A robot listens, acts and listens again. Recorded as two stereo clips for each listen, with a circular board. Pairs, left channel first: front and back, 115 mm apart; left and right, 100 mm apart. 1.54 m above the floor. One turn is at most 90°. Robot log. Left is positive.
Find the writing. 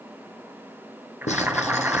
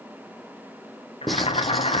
end: Facing the writing, 1 to 2 m away.